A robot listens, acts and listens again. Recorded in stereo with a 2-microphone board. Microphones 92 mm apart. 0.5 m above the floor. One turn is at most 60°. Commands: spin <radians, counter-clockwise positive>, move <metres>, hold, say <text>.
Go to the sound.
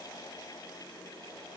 hold
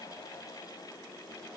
hold
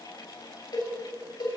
spin 0.96
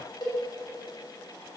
spin 1.05
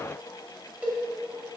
spin -0.35
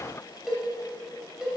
move 1.0
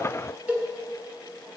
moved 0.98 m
spin -0.26
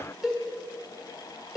move 1.0
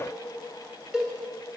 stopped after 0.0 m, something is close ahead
spin -0.17
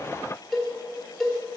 say Arrived at the cowbell, straight ahead.